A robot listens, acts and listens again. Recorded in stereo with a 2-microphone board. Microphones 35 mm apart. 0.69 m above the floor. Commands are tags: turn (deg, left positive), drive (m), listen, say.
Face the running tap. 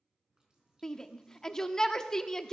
<turn deg="-25"/>
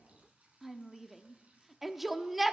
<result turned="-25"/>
<turn deg="-130"/>
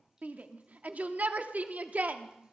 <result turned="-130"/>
<turn deg="-20"/>
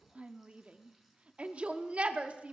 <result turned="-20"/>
<listen/>
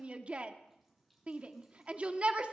<say>Found it: a running tap, straight ahead.</say>